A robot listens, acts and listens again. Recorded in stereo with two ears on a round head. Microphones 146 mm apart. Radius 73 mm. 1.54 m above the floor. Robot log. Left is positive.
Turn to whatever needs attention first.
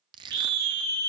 note: The scream: about 75° right or 105° right.
cmd yaw -75
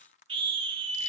note: So it is at 30° right.
cmd yaw -30
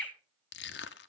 end: Facing the scream.